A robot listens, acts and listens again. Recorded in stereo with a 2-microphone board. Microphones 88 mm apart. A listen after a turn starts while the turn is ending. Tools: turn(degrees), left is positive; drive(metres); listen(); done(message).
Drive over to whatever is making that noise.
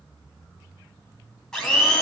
turn(degrees=30)
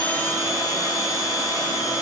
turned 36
turn(degrees=135)
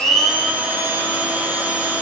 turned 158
turn(degrees=-20)
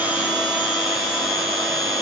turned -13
turn(degrees=-10)
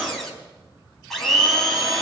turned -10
drive(metres=1.0)
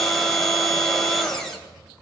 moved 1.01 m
drive(metres=1.0)
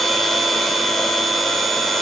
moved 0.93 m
drive(metres=1.0)
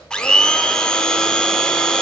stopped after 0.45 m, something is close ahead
turn(degrees=10)
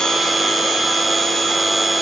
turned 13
done("Arrived at the blender, straight ahead.")